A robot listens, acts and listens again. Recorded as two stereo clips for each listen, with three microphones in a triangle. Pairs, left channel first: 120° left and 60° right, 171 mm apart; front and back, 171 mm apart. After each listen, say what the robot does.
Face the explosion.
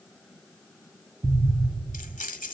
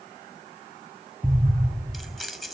Turn 80° right.
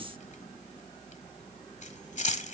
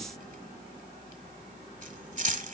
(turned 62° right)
Turn 20° right.
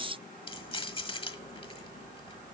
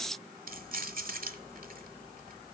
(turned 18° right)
I heard an explosion from this way, but can't make it out now.